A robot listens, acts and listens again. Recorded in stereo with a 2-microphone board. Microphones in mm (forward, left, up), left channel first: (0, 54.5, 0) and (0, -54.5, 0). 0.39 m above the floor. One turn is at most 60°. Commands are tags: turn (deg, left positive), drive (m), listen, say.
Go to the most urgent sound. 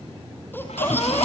<turn deg="20"/>
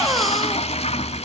<drive m="1.0"/>
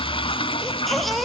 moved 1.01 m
<drive m="1.0"/>
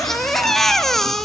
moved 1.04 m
<drive m="1.0"/>
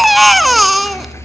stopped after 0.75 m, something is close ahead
<say>I am next to the baby crying.</say>